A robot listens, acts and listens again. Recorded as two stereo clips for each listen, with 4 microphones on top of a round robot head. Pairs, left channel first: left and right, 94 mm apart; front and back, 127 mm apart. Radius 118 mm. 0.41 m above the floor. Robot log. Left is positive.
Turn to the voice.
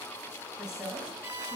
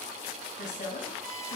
end: Found it: a woman speaking, straight ahead.